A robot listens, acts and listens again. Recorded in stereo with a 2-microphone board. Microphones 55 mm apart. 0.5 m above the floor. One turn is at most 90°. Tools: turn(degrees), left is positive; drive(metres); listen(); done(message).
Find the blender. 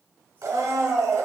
turn(degrees=-90)
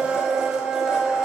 turn(degrees=-10)
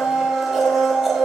done("Facing the blender.")